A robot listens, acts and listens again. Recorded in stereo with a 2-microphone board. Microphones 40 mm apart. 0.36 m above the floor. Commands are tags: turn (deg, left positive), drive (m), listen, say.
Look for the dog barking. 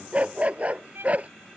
<turn deg="-35"/>
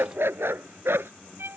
<turn deg="-100"/>
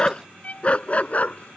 <turn deg="40"/>
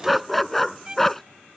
<say>Found it: a dog barking, straight ahead.</say>